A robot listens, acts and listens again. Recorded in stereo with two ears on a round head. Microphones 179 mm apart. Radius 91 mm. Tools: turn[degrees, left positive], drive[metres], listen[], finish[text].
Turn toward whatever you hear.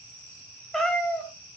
Action: turn[30]
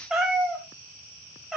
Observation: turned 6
Action: turn[30]
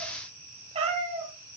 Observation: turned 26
Thought: So it is at 30° right.
Action: turn[-30]
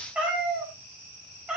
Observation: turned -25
Action: finish[Facing the cat meowing.]